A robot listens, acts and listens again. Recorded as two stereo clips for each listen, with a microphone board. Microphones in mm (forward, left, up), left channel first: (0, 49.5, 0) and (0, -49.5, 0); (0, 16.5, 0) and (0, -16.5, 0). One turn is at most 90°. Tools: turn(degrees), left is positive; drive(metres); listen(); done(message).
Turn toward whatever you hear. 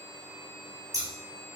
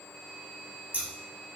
turn(degrees=-40)
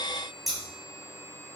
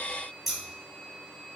done("Facing the scissors.")